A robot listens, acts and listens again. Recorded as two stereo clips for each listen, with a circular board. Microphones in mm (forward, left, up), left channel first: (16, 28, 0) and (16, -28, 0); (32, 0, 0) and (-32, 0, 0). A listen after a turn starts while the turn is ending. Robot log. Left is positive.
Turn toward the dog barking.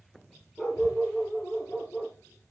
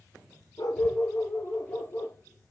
note: The dog barking: 25° left.
cmd yaw +25
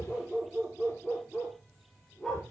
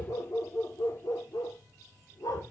note: The dog barking is now 10° left.
cmd yaw +10
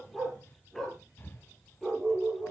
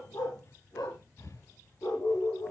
note: The dog barking is now 10° left.
cmd yaw +10
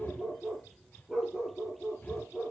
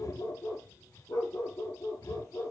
end: Facing the dog barking, over 4 m away.